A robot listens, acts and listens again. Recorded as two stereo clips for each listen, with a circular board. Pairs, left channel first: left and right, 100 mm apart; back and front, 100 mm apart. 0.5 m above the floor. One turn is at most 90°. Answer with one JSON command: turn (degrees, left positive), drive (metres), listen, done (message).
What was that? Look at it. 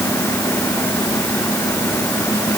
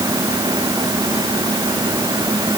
{"listen": true}
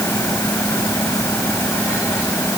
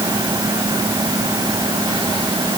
{"listen": true}
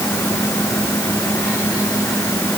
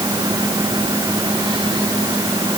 {"done": "I can't make out anything."}